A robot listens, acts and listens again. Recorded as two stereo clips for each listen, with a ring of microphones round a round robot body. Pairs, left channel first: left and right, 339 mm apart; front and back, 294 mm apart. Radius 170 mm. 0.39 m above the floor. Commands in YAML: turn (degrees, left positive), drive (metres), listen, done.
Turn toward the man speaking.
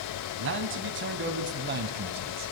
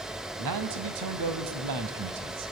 turn: -150
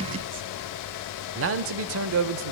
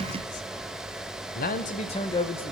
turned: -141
turn: -80
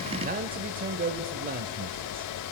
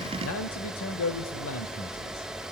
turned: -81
turn: -30
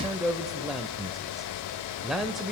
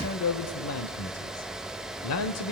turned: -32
done: "Found it: a man speaking, straight ahead."